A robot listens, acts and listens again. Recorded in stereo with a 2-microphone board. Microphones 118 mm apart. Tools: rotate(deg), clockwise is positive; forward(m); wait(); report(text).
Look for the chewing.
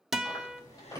rotate(-35)
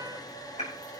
rotate(-115)
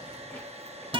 wait()
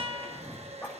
rotate(-20)
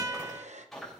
report("Facing the chewing.")